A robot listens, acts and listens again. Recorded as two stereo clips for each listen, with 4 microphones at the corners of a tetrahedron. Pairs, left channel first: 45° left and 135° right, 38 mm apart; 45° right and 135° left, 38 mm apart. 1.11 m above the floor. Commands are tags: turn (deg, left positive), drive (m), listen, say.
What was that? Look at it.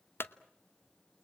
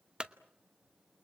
<turn deg="65"/>
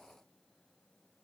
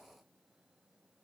<say>Facing where the clunk came from. I can't hear it now.</say>